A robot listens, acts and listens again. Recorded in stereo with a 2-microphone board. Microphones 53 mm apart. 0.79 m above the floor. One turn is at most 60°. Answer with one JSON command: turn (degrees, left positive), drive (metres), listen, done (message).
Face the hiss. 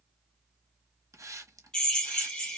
{"turn": -60}
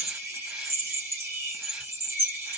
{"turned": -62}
{"listen": true}
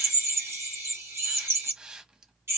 {"turn": -15}
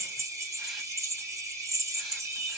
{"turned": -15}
{"listen": true}
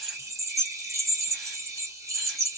{"listen": true}
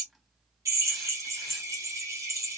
{"done": "I heard a hiss from this way, but can't make it out now."}